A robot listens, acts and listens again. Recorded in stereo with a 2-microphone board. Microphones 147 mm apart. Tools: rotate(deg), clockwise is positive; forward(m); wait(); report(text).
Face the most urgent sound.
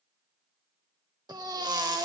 rotate(25)
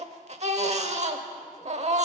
rotate(130)
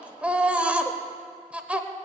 rotate(10)
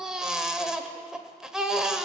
report("Facing the baby crying, under 1 m away.")